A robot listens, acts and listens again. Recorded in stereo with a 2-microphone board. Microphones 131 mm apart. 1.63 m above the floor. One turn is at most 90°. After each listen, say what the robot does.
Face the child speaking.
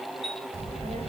Turn 60° right.
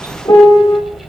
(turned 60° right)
Facing the child speaking, over 4 m away.